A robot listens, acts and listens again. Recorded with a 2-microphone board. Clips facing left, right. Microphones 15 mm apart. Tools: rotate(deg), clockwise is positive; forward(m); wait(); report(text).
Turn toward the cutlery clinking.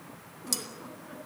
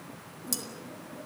rotate(-20)
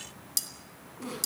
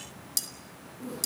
report("Found it: cutlery clinking, straight ahead.")